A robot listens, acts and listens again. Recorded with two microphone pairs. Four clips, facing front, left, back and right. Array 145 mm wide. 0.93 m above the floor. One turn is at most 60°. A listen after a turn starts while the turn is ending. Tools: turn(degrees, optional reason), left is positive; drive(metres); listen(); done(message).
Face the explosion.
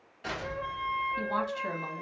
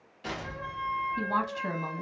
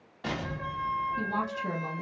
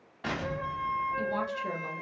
turn(degrees=-60, reason="The explosion: 130° right.")
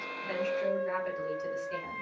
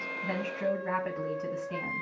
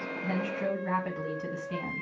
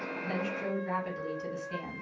turn(degrees=-60, reason="Nothing new. It was at 70° right.")
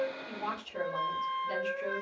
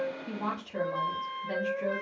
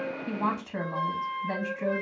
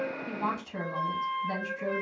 turn(degrees=-10, reason="Nothing new. It was at 10° right.")
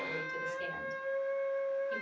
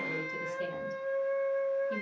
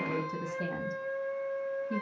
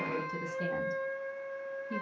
done("I heard an explosion from this way, but can't make it out now.")